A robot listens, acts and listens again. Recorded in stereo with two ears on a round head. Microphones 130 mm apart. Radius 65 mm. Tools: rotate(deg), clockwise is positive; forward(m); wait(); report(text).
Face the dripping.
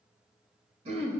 wait()
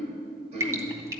rotate(20)
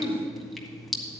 report("Found it: dripping, straight ahead, 1 to 2 m away.")